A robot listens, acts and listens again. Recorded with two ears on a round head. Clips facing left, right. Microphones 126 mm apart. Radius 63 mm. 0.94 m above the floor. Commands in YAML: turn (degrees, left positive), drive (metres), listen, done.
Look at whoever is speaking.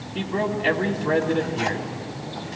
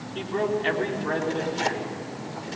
turn: 30
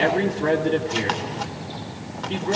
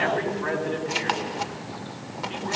turn: 135
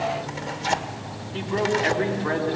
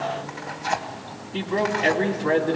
turn: -25
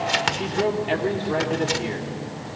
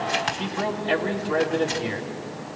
turn: 10
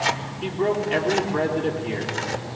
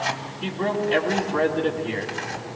done: "Found it: a man speaking, straight ahead, 2 to 4 m away."